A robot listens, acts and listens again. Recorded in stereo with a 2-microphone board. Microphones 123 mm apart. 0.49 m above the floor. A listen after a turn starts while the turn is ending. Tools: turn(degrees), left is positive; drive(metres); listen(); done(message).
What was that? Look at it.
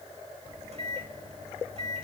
turn(degrees=-60)
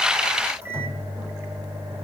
turn(degrees=-25)
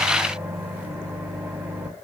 turn(degrees=-15)
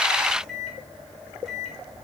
done("Facing the microwave.")